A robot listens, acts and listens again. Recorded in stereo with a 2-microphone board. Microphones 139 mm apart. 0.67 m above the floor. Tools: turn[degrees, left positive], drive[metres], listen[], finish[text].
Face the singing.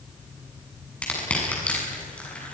Action: listen[]
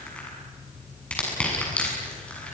Action: listen[]
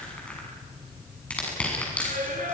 Action: turn[-90]
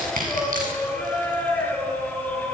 Thought: So it is at 10° left.
Action: turn[10]
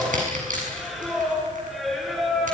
Action: finish[Facing the singing, over 4 m away.]